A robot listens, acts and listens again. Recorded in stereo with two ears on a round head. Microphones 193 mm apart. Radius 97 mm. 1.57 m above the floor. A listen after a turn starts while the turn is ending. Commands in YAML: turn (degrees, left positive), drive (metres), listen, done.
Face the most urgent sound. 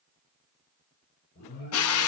turn: 45
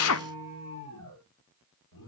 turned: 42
turn: 95
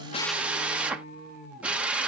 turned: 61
turn: 35
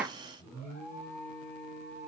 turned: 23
turn: 10
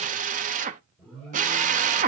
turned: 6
done: "Found it: an alarm, straight ahead, over 4 m away."